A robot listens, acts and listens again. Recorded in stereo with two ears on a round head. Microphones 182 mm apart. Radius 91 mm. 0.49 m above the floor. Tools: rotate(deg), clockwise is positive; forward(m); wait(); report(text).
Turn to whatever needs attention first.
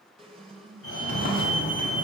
rotate(-65)
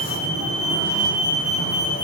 rotate(-30)
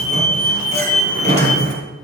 report("Facing the fire alarm, over 4 m away.")